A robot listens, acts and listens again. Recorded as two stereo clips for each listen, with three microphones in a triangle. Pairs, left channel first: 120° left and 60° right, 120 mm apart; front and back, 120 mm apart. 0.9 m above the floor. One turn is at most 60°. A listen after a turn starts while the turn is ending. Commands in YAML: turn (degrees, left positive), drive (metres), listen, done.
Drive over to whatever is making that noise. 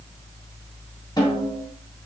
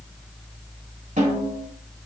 turn: 60
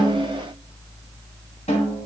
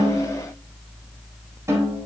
turn: 60
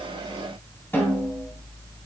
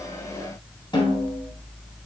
turn: 50
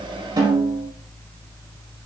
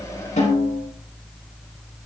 drive: 1.0
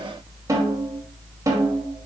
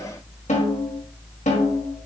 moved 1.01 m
drive: 1.0
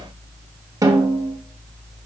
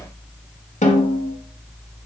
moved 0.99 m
drive: 1.0
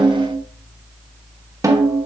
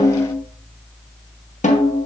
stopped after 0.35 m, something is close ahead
done: "I am next to the snare drum."